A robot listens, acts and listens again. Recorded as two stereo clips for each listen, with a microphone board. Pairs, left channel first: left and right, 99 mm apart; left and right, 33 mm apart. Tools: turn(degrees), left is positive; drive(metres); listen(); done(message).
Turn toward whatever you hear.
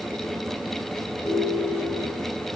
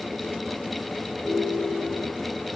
turn(degrees=90)
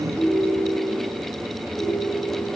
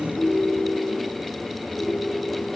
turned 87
done("Facing the ringtone.")